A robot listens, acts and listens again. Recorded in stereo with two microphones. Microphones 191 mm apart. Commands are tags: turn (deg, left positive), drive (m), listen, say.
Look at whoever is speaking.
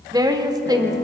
<turn deg="-20"/>
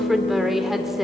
<say>Facing the woman speaking.</say>